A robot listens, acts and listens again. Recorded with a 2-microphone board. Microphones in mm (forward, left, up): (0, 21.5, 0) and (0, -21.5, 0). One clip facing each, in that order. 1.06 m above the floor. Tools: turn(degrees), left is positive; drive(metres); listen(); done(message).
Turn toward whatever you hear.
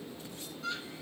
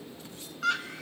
turn(degrees=-90)
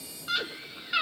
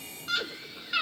done("Facing the scream, 1 to 2 m away.")